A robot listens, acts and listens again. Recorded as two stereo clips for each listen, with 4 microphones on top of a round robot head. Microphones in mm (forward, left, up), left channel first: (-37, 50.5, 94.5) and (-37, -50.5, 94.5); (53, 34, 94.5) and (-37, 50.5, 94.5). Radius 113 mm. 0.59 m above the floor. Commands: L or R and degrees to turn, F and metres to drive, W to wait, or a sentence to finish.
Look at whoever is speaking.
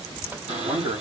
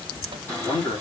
R50
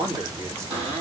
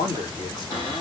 R30
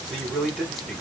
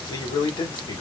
Found it: a man speaking, straight ahead.